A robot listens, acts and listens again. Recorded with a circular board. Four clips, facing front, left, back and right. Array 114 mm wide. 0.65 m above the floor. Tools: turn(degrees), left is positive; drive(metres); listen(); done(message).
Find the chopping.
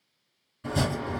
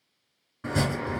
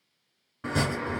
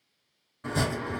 turn(degrees=165)
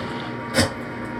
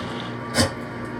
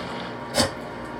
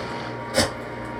done("Facing the chopping, 2 to 4 m away.")